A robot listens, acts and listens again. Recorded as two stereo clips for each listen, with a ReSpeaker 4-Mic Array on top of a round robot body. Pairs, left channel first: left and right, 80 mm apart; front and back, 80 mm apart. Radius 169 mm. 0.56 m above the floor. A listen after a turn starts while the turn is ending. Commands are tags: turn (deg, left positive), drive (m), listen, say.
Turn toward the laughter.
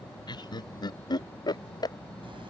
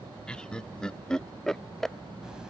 <turn deg="85"/>
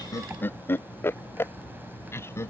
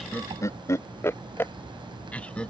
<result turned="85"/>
<turn deg="70"/>
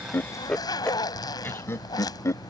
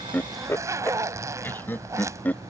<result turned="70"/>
<turn deg="60"/>
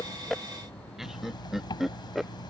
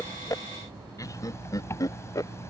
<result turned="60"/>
<say>Facing the laughter.</say>